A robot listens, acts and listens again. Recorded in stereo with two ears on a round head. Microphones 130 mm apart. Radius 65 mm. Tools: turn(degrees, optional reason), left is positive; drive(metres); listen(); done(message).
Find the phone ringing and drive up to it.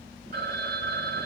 turn(degrees=-65, reason="The phone ringing: about 65° right or 115° right.")
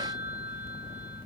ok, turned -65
turn(degrees=-45, reason="So it is at 45° right.")
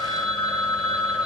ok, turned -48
drive(metres=1.0)
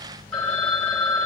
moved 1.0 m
turn(degrees=10, reason="The phone ringing is now 10° left.")
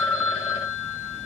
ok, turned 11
drive(metres=1.0)
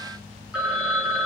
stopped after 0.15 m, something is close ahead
done("I am next to the phone ringing.")